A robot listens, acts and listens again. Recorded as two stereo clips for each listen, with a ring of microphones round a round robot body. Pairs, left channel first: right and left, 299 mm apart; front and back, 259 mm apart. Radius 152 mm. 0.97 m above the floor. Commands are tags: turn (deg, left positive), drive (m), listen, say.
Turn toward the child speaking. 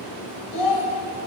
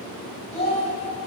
<turn deg="-70"/>
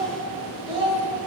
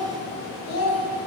<turn deg="15"/>
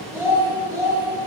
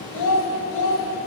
<turn deg="10"/>
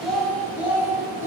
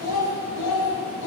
<turn deg="10"/>
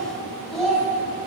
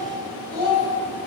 <say>Facing the child speaking, over 4 m away.</say>